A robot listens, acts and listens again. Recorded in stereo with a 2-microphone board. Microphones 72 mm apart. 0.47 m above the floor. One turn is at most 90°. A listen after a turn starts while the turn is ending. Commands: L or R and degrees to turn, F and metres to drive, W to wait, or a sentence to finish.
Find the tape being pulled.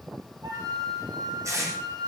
R50
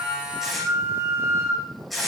Found it: tape being pulled, straight ahead.